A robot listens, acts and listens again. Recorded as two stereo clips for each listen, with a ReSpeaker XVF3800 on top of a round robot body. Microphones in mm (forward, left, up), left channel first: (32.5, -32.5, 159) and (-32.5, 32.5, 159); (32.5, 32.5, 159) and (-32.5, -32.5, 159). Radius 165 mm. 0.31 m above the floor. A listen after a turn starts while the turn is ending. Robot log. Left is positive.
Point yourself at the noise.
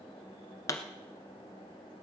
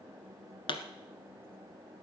note: The pop: 10° left.
cmd yaw +10
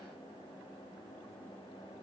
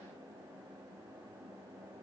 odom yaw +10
end: I heard a pop from this way, but can't make it out now.